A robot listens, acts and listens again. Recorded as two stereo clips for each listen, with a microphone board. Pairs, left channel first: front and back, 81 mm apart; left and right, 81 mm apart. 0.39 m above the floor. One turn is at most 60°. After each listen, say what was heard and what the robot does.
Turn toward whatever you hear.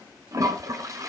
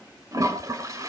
The toilet flushing: 130° right. Turn 60° right.
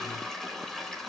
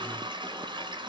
The toilet flushing is now 85° right. Turn 60° right.
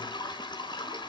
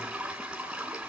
The toilet flushing is now 10° right. Turn 10° right.
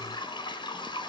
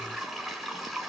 Facing the toilet flushing.